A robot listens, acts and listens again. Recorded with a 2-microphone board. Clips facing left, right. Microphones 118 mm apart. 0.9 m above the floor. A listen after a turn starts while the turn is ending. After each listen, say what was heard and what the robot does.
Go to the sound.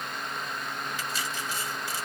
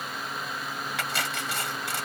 Turn 90° right.
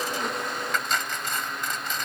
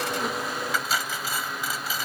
Drive 1.0 m forward.
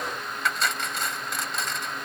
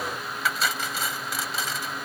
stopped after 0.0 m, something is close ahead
Something is in my way. I am facing the cutlery clinking but have not reached it.